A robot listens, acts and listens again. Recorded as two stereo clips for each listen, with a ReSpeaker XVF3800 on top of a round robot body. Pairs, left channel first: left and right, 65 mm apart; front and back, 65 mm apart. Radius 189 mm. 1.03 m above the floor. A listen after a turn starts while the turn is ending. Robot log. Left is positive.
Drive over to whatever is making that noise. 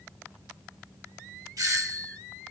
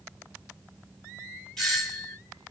note: The doorbell: 85° right.
cmd yaw -85
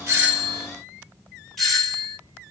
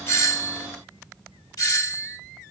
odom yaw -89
cmd fwd 1.0
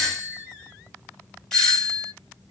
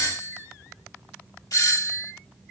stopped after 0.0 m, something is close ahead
note: The doorbell is now 10° left.
cmd yaw +10
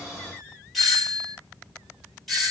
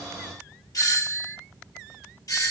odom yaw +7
end: Blocked. The doorbell is further on, straight ahead.